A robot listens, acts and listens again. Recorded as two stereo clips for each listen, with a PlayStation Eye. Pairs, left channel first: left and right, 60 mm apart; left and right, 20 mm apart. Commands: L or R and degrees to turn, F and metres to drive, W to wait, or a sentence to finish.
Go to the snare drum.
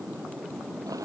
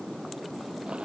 W
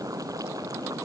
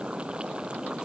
W
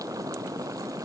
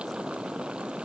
I can't make out a snare drum to turn to.